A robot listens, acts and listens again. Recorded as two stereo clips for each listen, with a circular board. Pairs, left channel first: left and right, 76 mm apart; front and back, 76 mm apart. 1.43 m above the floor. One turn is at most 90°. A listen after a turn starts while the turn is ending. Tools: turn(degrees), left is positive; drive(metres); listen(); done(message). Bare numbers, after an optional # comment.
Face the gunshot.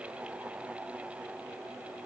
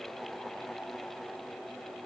listen()
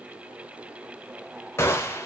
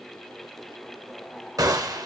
# The gunshot: 145° left.
turn(90)
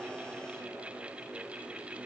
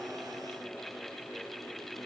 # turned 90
# Nothing new. It was at 55° left.
turn(55)
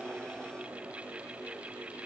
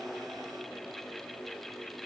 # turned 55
done("Facing where the gunshot came from. I can't hear it now.")